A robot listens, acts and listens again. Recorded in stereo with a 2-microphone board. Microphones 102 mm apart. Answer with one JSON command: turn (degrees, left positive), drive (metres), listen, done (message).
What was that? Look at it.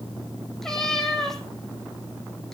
{"turn": 30}
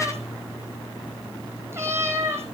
{"turn": -25}
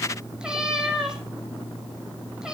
{"turn": -10}
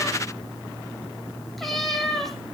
{"done": "Facing the cat meowing, 2 to 4 m away."}